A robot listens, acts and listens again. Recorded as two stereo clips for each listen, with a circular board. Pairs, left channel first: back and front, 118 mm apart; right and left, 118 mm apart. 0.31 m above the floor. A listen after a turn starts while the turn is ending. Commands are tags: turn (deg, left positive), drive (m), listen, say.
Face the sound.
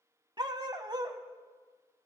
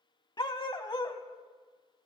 <turn deg="-45"/>
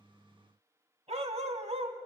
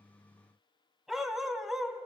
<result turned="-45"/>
<say>Found it: a dog barking, straight ahead.</say>